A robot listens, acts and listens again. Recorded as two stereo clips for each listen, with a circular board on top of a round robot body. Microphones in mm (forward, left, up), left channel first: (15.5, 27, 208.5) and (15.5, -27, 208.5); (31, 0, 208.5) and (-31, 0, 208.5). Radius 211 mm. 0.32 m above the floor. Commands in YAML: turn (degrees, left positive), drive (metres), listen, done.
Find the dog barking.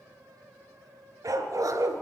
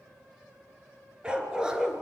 turn: -100
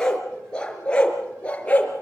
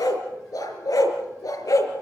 turn: 20
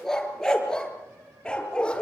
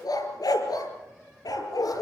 turn: 15
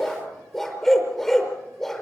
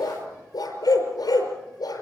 done: "Facing the dog barking."